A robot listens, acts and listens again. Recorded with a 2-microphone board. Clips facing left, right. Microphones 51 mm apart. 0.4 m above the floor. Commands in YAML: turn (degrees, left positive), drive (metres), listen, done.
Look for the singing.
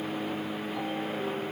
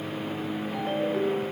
listen: true
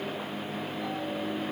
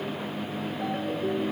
listen: true
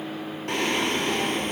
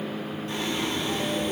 turn: 65
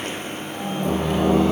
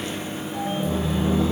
turn: 70
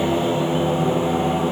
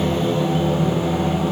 turn: 20
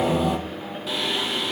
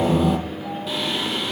done: "Found it: singing, straight ahead, 2 to 4 m away."